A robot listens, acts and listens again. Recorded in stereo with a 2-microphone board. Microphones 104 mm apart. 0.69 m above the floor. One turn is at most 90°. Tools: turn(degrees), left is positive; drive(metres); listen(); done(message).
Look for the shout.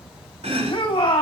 turn(degrees=55)
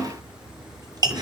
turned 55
listen()
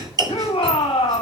turn(degrees=65)
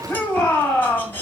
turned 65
turn(degrees=10)
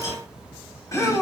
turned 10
done("Facing the shout.")